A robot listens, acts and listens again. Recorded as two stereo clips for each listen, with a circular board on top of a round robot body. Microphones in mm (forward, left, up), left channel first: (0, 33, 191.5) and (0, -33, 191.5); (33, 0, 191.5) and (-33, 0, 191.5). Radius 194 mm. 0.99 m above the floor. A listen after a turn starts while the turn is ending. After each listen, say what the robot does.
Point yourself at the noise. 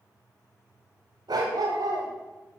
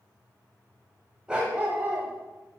Turn 120° right.
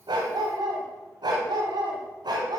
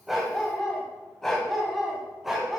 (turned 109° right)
Turn 95° right.
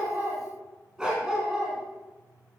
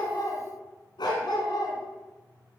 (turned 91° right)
Turn 10° right.
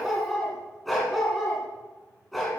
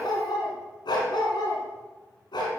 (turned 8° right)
Facing the dog barking, 2 to 4 m away.